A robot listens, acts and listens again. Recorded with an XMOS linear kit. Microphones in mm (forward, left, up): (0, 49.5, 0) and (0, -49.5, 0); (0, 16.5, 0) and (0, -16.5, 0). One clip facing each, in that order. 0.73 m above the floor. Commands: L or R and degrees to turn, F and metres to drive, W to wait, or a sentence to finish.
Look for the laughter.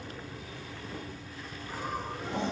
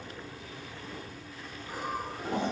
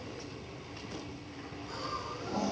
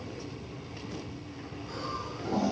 R30
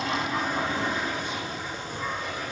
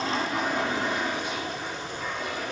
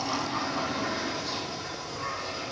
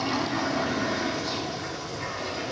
L40
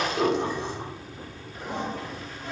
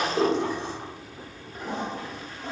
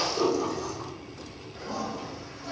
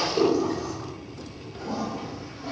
L25
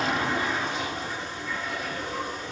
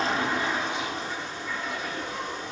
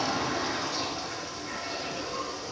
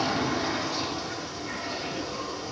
L15
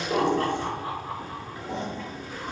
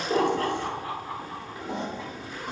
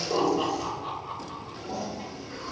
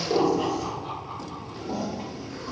L10
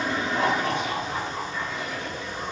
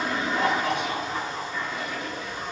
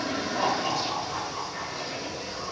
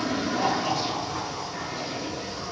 Facing the laughter, 1 to 2 m away.